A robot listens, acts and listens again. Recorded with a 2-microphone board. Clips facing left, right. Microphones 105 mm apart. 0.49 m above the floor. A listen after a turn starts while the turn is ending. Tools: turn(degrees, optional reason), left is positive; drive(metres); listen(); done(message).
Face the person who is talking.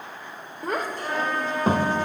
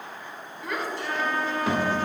turn(degrees=40, reason="The child speaking: about 40° left or 140° left.")
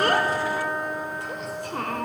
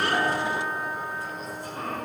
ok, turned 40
turn(degrees=95, reason="So it is at 95° left.")
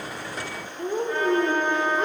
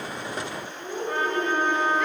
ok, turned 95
turn(degrees=40, reason="The child speaking is now 40° left.")
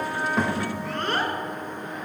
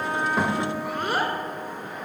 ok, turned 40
turn(degrees=-10, reason="The child speaking is now 10° right.")
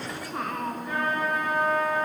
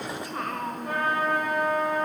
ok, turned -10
done("Facing the child speaking, under 1 m away.")